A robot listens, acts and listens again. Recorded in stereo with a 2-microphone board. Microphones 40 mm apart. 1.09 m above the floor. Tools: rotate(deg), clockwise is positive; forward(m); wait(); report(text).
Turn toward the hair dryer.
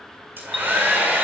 rotate(55)
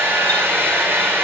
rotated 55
rotate(75)
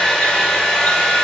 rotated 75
rotate(-10)
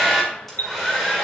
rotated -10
report("Found it: a hair dryer, straight ahead, 2 to 4 m away.")